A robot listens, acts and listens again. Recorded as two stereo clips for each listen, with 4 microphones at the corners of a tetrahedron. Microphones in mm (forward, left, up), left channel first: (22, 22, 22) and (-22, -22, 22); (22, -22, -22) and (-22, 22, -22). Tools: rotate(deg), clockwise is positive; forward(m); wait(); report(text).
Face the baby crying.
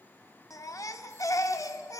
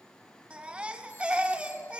rotate(-65)
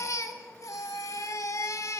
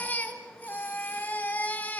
rotate(-15)
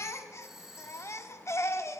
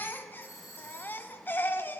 rotate(-10)
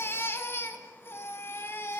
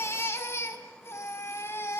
report("Facing the baby crying.")